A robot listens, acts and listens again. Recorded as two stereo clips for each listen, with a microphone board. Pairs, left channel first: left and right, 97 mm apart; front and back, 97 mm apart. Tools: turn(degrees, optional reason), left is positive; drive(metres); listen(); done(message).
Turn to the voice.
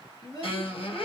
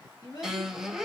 turn(degrees=45, reason="The child speaking: 45° left.")
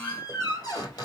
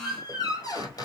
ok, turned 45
listen()
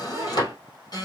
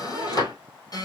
listen()
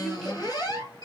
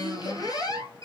done("Facing where the child speaking came from. I can't hear it now.")